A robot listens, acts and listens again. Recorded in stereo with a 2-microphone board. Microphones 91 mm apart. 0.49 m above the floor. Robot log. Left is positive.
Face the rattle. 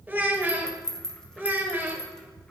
cmd yaw +30
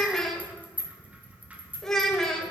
note: So it is at 20° right.
cmd yaw -20
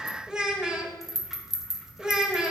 end: Facing the rattle, under 1 m away.